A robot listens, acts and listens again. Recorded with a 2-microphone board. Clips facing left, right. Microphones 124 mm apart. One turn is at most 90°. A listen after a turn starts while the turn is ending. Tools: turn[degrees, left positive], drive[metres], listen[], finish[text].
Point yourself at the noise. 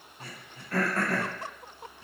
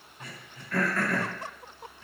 Thought: The throat clearing: about 35° left or 145° left.
Action: turn[35]
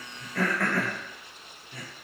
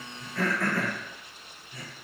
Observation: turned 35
Thought: So it is at 105° left.
Action: turn[90]
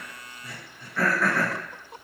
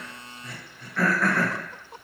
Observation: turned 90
Action: finish[Found it: throat clearing, straight ahead.]